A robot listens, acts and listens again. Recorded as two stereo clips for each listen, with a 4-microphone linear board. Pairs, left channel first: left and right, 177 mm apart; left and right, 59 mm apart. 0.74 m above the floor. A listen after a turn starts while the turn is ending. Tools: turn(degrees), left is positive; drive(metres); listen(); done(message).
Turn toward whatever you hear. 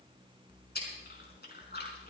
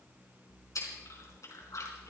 turn(degrees=70)
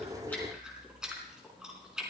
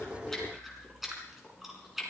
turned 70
done("Found it: chewing, straight ahead, over 4 m away.")